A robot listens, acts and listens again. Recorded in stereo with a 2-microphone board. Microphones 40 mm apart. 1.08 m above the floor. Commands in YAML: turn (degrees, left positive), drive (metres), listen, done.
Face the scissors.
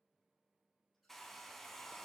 listen: true
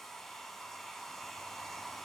listen: true
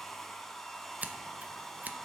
turn: -45
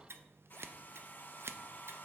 turn: -90
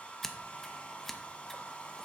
turn: 10
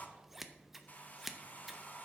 done: "Facing the scissors."